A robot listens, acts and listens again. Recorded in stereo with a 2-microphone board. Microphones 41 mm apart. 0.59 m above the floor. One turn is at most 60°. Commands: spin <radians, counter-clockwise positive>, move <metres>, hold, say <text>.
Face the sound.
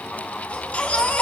spin 0.44
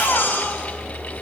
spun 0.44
spin 1.05
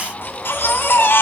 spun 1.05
spin 1.05
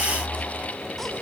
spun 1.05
spin 0.17
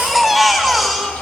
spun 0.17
say Facing the baby crying.